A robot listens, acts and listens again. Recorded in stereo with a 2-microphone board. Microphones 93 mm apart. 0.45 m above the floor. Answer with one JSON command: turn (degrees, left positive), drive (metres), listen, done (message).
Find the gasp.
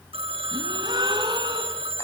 {"turn": -50}
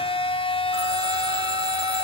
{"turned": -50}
{"listen": true}
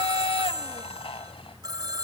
{"done": "I heard a gasp, but can't make it out now. It was about straight ahead or 80° right."}